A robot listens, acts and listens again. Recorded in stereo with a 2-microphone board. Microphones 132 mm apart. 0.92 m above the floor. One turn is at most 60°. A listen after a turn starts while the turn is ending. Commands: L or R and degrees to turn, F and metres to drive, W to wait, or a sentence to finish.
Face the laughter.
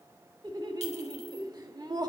R30
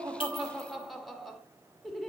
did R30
Found it: laughter, straight ahead.